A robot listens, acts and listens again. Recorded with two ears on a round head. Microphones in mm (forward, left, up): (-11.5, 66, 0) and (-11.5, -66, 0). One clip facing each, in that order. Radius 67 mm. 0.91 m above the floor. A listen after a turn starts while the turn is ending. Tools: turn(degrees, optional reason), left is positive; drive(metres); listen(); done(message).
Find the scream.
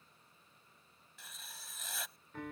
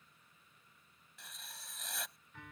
listen()
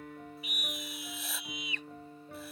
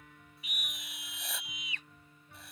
turn(degrees=90)
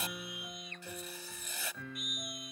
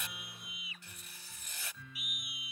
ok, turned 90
done("Found it: a scream, straight ahead.")